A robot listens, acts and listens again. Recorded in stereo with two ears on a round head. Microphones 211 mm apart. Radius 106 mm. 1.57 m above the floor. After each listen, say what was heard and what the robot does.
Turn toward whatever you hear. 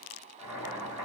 The boiling: about 15° left or 165° left. Turn 15° left.
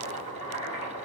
So it is at 150° left. Turn 150° left.
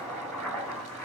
Facing the boiling, 1 to 2 m away.